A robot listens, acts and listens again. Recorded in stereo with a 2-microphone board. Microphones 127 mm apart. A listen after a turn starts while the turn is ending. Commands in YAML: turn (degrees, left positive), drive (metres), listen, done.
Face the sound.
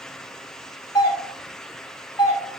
turn: 35
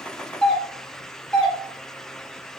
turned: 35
turn: 10
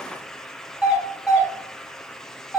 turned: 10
done: "Facing the doorbell, 2 to 4 m away."